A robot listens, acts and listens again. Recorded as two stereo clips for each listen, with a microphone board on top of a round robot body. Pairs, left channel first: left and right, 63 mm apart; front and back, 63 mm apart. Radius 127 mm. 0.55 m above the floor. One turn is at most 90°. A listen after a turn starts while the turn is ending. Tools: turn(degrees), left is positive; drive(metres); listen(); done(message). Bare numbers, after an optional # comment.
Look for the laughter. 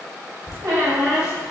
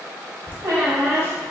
# The laughter: 60° left.
turn(60)
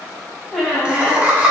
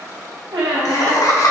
# The laughter is now 25° right.
turn(-25)
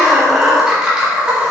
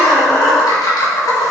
# The laughter is now 20° right.
turn(-20)
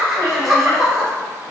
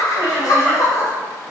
# The laughter is now 10° right.
turn(-10)
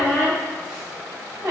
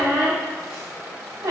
listen()
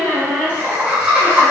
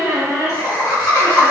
# The laughter is now 20° right.
turn(-20)
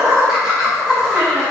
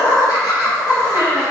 # The laughter is now 10° right.
turn(-10)
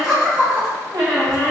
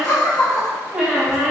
done("Facing the laughter, 1 to 2 m away.")